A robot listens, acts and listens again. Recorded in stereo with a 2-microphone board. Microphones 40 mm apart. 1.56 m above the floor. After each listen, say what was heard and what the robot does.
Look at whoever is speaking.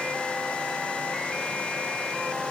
Keep listening.
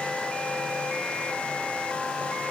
Keep listening.
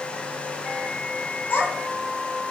The child speaking: about 55° left or 125° left. Turn 55° left.
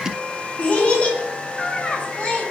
So it is at 40° left. Turn 40° left.
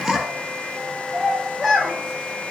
Found it: a child speaking, straight ahead, under 1 m away.